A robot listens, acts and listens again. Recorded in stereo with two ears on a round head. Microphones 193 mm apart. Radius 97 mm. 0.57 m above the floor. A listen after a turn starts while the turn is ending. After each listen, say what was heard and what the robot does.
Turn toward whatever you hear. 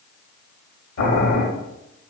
The boiling: about 45° left or 135° left. Turn 45° left.
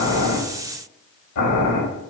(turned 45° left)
So it is at 85° left. Turn 85° left.
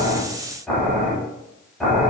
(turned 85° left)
Facing the boiling, under 1 m away.